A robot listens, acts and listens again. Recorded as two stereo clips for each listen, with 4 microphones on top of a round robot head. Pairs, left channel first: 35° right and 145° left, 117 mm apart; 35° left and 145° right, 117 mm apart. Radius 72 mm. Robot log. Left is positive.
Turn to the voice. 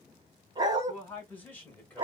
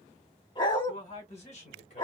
note: The man speaking: 40° left.
cmd yaw +40
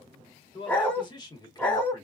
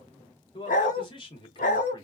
note: The man speaking is now 15° left.
cmd yaw +15
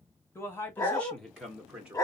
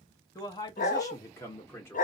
note: The man speaking is now 80° left.
cmd yaw +80
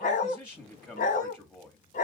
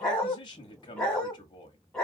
note: The man speaking is now 30° left.
cmd yaw +30
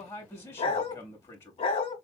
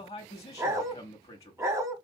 end: Facing the man speaking.